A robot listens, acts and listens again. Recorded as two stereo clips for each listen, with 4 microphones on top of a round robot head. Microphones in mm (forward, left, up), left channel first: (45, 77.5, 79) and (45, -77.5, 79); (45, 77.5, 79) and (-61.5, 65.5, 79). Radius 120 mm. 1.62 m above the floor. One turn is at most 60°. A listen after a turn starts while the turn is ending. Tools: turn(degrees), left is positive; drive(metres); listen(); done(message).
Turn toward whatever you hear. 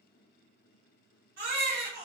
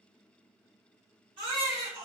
turn(degrees=-60)
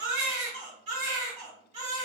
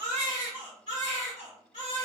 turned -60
turn(degrees=-60)
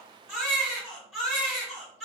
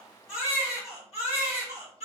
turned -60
done("Found it: a baby crying, straight ahead, 2 to 4 m away.")